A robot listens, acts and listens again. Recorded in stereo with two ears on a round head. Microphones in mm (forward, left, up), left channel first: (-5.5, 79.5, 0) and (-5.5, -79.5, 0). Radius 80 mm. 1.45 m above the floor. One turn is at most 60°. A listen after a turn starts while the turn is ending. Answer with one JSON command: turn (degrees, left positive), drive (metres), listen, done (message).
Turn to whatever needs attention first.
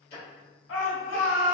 {"turn": 60}
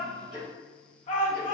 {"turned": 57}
{"turn": 40}
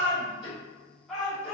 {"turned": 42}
{"done": "Facing the shout."}